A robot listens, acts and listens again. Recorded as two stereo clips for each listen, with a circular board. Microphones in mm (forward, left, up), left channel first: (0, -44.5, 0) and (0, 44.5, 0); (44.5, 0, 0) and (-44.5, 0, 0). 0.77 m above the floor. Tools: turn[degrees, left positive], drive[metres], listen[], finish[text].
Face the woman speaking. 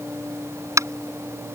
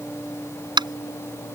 Action: listen[]
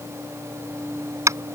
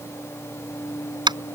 Action: listen[]
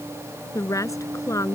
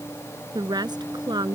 Thought: The woman speaking: 145° right.
Action: turn[-145]
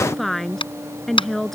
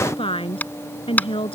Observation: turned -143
Action: finish[Found it: a woman speaking, straight ahead.]